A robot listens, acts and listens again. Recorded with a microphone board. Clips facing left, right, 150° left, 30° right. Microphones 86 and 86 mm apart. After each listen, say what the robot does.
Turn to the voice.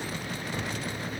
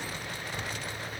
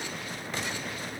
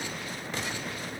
Keep listening.
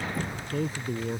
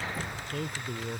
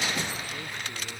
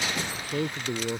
Facing the man speaking.